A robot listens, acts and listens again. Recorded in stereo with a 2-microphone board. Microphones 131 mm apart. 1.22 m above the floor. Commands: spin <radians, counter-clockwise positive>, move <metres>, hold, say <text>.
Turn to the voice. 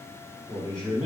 spin 0.70
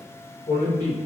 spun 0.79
spin 1.66
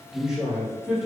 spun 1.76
say Facing the man speaking, 1 to 2 m away.